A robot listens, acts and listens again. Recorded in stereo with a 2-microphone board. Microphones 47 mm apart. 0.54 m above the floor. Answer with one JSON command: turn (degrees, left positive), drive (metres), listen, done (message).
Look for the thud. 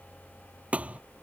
{"turn": -30}
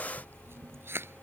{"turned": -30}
{"listen": true}
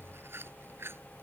{"done": "I heard a thud, but can't make it out now. It was about straight ahead or 120° right."}